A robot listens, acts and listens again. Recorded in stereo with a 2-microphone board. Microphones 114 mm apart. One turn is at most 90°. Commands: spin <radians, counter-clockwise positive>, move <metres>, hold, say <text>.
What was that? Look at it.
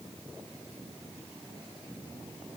hold
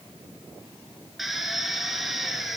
spin 0.52
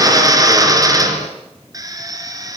spin -0.61
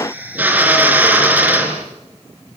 spin -0.26
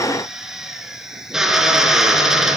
say Found it: a drill, straight ahead, over 4 m away.